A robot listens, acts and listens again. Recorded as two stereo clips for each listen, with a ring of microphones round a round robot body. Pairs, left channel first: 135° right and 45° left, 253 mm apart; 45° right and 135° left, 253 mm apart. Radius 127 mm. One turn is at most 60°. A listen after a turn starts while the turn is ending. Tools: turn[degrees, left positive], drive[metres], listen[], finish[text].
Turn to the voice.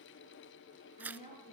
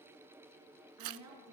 Thought: The woman speaking: 160° left.
Action: turn[60]
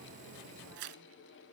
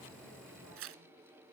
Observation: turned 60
Thought: Nothing new. It was at 100° left.
Action: turn[60]
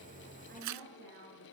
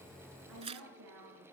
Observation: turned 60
Thought: The woman speaking is now 100° left.
Action: turn[60]
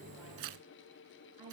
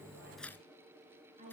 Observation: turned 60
Thought: The woman speaking is now 70° left.
Action: turn[60]
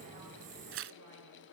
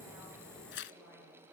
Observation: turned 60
Thought: Nothing new. It was at 10° left.
Action: turn[10]
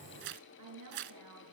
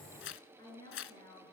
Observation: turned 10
Thought: The woman speaking is now 30° left.
Action: turn[30]
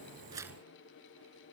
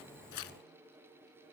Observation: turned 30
Action: listen[]
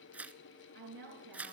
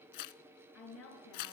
Action: finish[Found it: a woman speaking, straight ahead, over 4 m away.]